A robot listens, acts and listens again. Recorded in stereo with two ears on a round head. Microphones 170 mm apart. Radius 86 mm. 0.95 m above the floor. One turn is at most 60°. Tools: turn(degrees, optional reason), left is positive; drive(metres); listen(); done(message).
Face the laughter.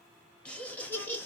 turn(degrees=30)
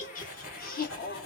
turn(degrees=60, reason="So it is at 130° left.")
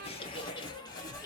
turn(degrees=20, reason="The laughter is now 20° left.")
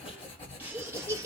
turn(degrees=-20, reason="The laughter is now 20° right.")
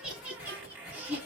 turn(degrees=-10, reason="The laughter is now 10° right.")
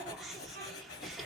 done("Facing the laughter, 1 to 2 m away.")